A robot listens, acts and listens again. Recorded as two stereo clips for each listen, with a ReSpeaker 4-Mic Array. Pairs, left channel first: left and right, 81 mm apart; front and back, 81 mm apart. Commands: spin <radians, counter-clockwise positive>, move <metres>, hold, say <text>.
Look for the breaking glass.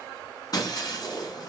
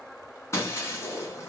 spin 0.96
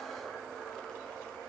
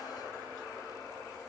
say I heard breaking glass from this way, but can't make it out now.